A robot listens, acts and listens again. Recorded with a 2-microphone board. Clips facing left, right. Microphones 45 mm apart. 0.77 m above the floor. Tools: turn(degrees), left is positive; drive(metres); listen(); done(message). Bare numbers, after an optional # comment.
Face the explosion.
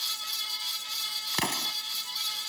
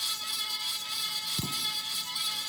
turn(90)
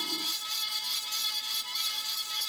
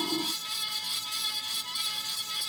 done("I heard an explosion from this way, but can't make it out now.")